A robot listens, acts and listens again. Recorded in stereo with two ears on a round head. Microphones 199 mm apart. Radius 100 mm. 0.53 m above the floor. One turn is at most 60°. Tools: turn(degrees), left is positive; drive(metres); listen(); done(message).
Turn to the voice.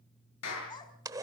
turn(degrees=20)
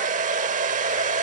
listen()
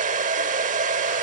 listen()
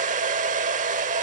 done("I heard a child speaking, but can't make it out now. It was about straight ahead or 140° left.")